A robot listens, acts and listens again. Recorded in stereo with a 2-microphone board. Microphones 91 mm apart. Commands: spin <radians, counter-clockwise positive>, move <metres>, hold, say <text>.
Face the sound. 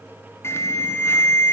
spin 0.44
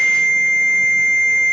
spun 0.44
say Facing the alarm.